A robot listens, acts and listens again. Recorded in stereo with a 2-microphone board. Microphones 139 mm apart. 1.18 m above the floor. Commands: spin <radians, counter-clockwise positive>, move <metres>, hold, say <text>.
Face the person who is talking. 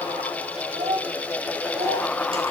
spin -0.96
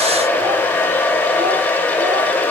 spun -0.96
hold
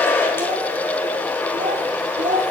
spin -1.22
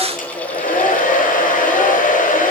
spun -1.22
hold
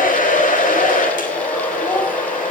hold
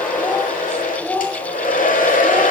spin 0.26
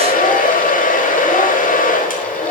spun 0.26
hold
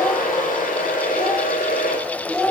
say Found it: a child speaking, straight ahead, 2 to 4 m away.